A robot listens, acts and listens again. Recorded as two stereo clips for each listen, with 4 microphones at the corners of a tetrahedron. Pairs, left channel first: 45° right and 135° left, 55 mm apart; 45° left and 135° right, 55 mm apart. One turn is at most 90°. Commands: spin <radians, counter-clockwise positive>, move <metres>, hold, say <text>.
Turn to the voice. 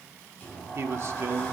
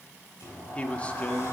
spin 1.57
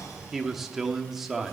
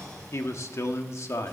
spin 0.87
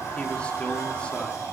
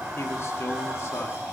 hold
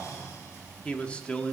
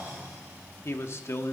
spin 0.35
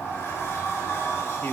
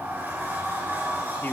hold
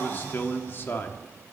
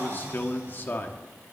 say Found it: a man speaking, straight ahead.